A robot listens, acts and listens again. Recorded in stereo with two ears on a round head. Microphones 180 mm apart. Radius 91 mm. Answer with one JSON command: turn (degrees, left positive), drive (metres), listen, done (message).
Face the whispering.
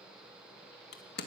{"listen": true}
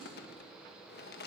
{"listen": true}
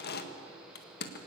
{"done": "I can't make out whispering to turn to."}